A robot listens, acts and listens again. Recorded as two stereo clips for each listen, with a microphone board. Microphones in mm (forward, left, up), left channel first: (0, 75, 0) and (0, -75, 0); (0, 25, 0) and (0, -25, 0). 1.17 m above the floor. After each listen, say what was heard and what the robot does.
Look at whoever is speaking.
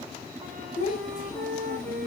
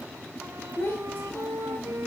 The child speaking: about 70° left or 110° left. Turn 70° left.
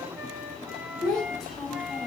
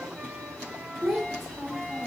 Found it: a child speaking, straight ahead.